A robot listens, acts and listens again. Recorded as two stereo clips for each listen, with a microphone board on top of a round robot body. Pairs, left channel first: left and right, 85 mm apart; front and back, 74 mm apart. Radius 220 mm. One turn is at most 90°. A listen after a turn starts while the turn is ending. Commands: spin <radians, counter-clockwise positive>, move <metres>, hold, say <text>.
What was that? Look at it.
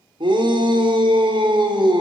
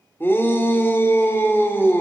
spin -1.05
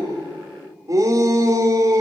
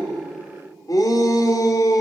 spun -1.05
spin -0.61
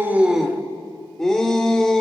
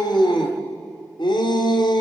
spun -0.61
say Found it: a shout, straight ahead.